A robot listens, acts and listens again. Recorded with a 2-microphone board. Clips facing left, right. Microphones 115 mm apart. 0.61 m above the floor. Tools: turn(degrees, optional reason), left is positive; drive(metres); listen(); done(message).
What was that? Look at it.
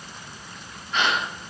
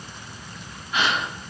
turn(degrees=-30)
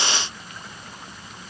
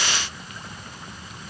listen()
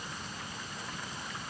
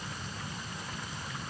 done("I heard a gasp, but can't make it out now. It was about 20° left or 140° right.")